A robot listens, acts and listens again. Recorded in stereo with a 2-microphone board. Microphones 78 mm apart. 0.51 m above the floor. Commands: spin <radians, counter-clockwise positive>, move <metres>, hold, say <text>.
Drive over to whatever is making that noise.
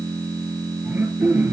spin -0.35
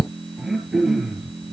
move 1.0
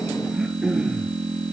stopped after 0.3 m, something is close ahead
say Blocked. The throat clearing is further on, straight ahead.